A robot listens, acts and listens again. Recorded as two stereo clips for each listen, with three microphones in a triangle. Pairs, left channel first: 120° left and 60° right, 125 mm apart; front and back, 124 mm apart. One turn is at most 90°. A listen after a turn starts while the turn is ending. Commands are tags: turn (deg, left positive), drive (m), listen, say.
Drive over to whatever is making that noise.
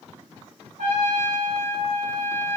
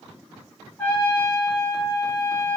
<turn deg="-75"/>
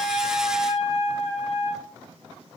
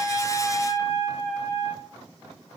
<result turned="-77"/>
<drive m="1.0"/>
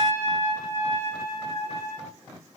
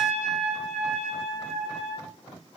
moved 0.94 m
<drive m="1.0"/>
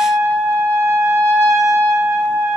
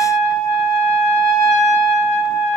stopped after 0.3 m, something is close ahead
<turn deg="10"/>
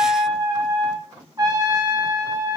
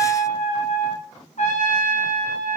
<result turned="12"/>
<say>Arrived at the trumpet, straight ahead.</say>